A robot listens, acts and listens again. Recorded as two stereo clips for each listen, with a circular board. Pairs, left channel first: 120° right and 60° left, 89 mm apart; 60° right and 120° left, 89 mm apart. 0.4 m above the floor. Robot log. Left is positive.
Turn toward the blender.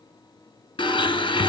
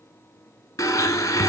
note: The blender: 110° right.
cmd yaw -110
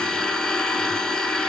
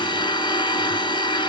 note: The blender is now 35° right.
cmd yaw -35
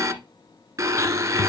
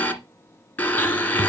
note: The blender is now 10° left.
cmd yaw +10
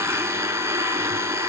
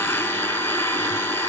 end: Found it: a blender, straight ahead.